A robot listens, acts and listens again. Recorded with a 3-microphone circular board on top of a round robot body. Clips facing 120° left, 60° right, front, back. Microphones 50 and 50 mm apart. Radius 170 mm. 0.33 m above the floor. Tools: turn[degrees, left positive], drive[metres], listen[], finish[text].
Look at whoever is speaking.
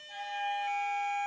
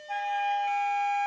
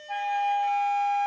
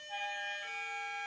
Action: listen[]
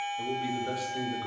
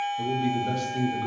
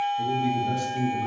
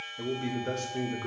Thought: The man speaking: 160° right.
Action: turn[-160]
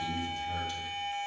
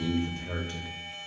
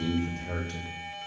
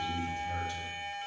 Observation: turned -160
Thought: The man speaking is now 20° right.
Action: turn[-20]
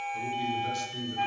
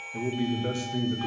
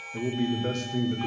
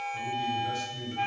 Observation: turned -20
Action: finish[Found it: a man speaking, straight ahead, 1 to 2 m away.]